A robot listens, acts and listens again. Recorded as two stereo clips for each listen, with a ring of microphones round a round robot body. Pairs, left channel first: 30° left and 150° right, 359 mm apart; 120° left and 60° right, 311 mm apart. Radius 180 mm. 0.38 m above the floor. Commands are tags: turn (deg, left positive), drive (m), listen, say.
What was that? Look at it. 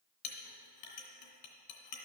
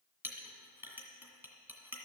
<turn deg="25"/>
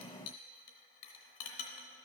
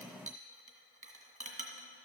<say>Facing the clink.</say>